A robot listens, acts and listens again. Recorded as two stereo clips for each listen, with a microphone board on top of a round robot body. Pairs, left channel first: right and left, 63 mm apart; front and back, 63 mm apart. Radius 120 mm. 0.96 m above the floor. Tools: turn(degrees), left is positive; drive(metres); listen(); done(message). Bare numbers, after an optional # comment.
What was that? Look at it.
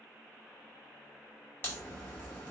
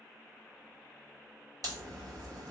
# The crack: 150° right.
turn(-150)
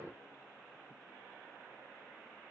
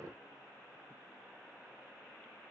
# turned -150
done("I heard a crack from this way, but can't make it out now.")